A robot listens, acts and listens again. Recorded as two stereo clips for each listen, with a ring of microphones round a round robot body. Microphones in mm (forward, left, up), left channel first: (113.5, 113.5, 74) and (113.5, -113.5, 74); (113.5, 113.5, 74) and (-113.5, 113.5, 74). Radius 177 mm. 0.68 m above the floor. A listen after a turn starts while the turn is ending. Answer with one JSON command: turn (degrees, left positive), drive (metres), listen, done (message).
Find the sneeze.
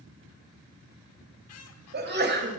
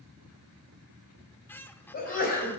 {"turn": -50}
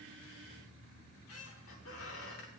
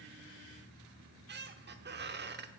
{"done": "Facing where the sneeze came from. I can't hear it now."}